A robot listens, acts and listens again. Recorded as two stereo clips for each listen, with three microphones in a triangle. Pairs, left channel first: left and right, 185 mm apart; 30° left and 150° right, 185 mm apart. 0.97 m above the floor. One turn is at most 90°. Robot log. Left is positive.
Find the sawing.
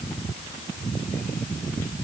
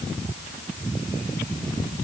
cmd idle
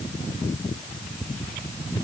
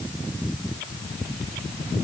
cmd idle
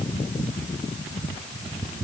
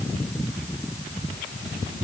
end: I can't make out sawing.